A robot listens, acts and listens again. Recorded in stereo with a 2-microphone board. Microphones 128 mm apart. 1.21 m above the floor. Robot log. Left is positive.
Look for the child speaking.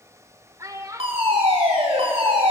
note: The child speaking: about 25° right or 155° right.
cmd yaw -25
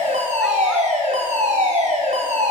cmd idle
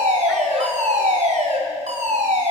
cmd idle
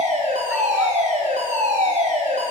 end: I heard a child speaking, but can't make it out now. It was about straight ahead or 130° right.